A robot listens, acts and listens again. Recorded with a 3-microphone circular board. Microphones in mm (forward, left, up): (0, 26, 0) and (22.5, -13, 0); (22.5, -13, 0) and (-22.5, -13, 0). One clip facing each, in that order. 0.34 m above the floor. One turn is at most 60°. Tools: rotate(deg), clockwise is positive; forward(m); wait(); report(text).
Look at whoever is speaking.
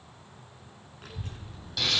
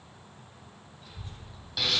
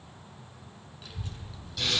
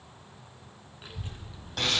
rotate(-60)
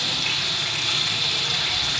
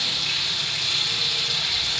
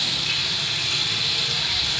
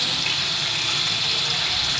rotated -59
rotate(-60)
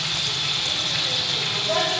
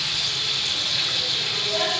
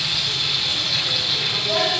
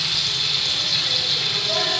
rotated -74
rotate(15)
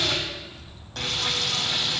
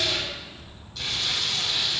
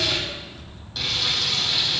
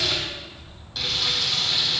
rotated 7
rotate(10)
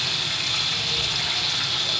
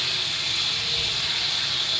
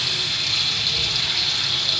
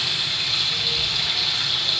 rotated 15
report("Found it: a child speaking, straight ahead.")